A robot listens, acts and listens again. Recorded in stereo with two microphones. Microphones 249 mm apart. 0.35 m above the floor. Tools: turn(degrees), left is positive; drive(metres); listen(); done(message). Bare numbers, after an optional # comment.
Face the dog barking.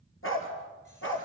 # The dog barking: about 55° left or 125° left.
turn(55)
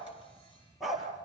done("Facing the dog barking, over 4 m away.")